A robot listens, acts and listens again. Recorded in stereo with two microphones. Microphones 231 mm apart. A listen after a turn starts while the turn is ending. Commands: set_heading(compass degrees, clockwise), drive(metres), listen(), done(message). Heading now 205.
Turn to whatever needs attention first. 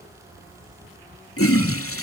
listen()
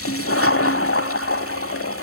listen()
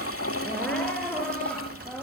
set_heading(175)
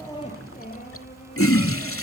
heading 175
set_heading(30)
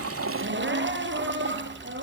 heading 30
set_heading(85)
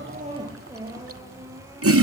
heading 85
set_heading(95)
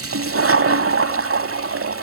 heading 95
listen()
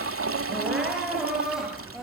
done("Facing the crying, over 4 m away.")